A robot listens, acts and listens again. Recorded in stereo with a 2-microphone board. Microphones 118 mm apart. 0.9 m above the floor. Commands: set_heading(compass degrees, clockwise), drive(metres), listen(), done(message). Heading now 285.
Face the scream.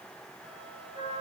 listen()
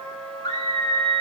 set_heading(245)
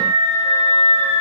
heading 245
set_heading(150)
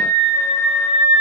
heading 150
set_heading(160)
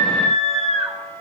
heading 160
done("Facing the scream.")